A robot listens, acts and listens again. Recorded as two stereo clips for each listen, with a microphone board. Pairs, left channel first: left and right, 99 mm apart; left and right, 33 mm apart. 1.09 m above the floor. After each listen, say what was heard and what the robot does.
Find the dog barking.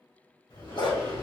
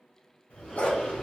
The dog barking: about 55° left or 125° left. Turn 55° left.
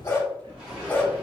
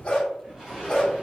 So it is at 15° left. Turn 15° left.
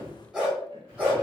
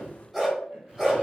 The dog barking is now 15° right. Turn 15° right.
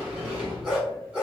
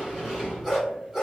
The dog barking is now 15° right. Turn 15° right.
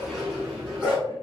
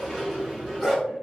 The dog barking is now 10° right. Turn 10° right.
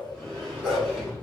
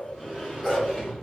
Facing the dog barking, 2 to 4 m away.